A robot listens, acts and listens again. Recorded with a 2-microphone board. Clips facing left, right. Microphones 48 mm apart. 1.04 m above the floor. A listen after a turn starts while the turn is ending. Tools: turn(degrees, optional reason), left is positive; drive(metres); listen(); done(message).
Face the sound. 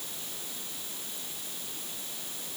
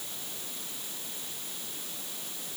listen()
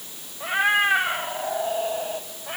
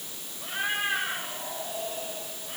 turn(degrees=90)
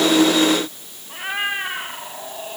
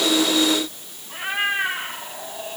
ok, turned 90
done("Facing the cat meowing.")